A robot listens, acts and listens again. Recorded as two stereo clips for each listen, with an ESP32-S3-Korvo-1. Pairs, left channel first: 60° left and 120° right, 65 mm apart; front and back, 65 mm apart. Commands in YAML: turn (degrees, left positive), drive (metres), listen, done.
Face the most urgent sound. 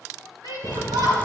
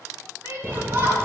turn: -130
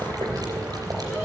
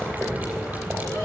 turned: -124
listen: true
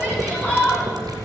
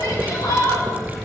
done: "Found it: a shout, straight ahead, over 4 m away."